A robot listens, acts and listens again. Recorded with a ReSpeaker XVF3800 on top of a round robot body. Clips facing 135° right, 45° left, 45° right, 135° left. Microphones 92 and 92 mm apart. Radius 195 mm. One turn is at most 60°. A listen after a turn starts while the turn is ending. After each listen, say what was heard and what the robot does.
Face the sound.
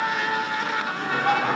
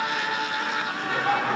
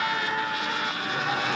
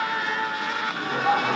The laughter: 155° left. Turn 60° left.
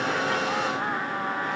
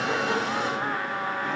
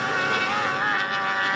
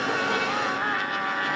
Nothing new. It was at 95° left. Turn 60° left.
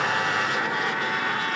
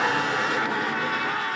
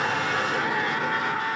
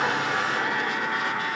Nothing new. It was at 35° left. Turn 35° left.
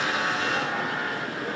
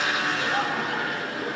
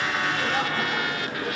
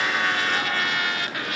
I heard laughter from this way, but can't make it out now.